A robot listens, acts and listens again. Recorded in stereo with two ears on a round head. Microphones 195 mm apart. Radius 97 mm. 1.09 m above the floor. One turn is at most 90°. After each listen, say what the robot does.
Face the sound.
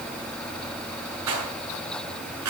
Turn 90° right.
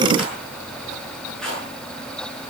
Facing the rattle.